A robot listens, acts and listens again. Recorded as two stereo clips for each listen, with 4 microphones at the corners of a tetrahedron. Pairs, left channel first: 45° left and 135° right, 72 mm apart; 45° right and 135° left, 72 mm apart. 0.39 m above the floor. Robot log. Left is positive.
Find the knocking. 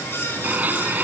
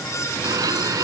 cmd idle
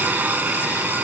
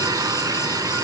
cmd idle
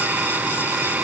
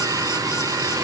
end: I can't make out knocking, only a blender.